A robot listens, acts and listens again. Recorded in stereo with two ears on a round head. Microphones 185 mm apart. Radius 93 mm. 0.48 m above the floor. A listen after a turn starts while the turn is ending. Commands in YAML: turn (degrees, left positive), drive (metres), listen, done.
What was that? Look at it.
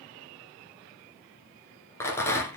turn: 30
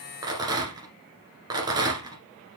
turn: -20
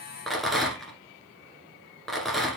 done: "Found it: a rattle, straight ahead."